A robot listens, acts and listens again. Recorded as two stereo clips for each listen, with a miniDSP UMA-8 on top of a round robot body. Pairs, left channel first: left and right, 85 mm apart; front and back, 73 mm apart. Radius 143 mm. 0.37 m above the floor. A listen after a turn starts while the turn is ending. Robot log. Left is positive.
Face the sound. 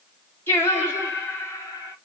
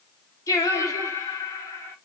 note: The singing: 45° left.
cmd yaw +45
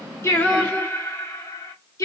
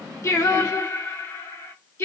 note: The singing is now 50° left.
cmd yaw +50
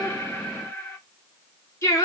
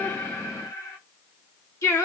note: The singing is now 40° left.
cmd yaw +40
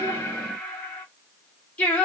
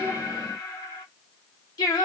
note: The singing is now 20° left.
cmd yaw +20
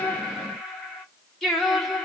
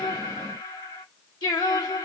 end: Facing the singing.